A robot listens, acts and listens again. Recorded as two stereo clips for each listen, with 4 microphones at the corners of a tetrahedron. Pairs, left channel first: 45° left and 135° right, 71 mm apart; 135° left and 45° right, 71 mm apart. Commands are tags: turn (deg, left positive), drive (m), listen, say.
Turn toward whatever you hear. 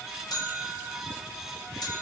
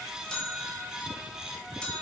<turn deg="60"/>
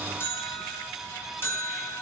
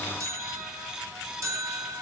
<turn deg="-10"/>
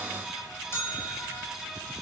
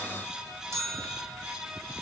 <say>Found it: a bell, straight ahead.</say>